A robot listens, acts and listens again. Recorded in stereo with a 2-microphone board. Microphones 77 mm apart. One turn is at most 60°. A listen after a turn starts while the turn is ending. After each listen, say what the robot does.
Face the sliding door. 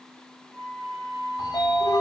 Turn 60° left.
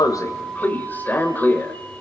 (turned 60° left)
Turn 30° left.
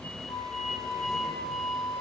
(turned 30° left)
Facing the sliding door, 1 to 2 m away.